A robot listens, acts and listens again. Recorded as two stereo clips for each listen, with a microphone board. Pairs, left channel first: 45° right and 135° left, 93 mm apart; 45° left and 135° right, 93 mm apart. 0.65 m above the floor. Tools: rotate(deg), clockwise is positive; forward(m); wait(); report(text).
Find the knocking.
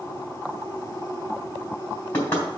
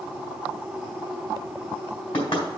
rotate(-25)
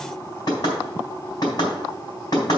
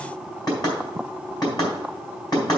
report("Found it: knocking, straight ahead, 2 to 4 m away.")